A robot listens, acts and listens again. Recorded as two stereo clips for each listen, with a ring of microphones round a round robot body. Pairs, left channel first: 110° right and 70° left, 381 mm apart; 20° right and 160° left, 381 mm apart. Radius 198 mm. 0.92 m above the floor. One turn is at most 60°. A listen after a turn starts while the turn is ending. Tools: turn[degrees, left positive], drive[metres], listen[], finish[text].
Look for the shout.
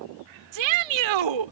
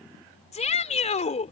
Thought: The shout: 50° left.
Action: turn[50]
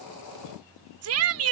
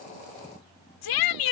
Thought: The shout is now 15° left.
Action: turn[15]
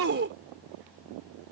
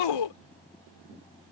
Action: finish[Found it: a shout, straight ahead.]